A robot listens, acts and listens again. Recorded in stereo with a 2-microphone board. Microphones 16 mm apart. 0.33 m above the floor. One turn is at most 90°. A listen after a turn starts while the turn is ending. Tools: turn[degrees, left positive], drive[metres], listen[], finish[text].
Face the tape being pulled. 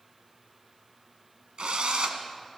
Action: listen[]
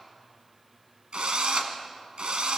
Action: listen[]
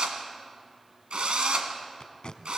Thought: The tape being pulled: about 60° left or 120° left.
Action: turn[60]
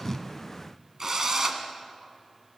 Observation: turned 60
Action: listen[]
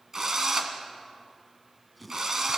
Action: finish[Found it: tape being pulled, straight ahead.]